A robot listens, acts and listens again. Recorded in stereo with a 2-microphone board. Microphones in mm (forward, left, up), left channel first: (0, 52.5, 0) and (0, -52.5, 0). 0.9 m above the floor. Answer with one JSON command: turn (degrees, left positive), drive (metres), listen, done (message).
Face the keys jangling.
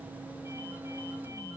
{"listen": true}
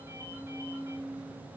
{"listen": true}
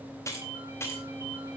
{"turn": 25}
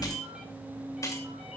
{"turn": 30}
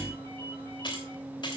{"turn": 130}
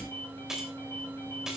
{"done": "Found it: keys jangling, straight ahead."}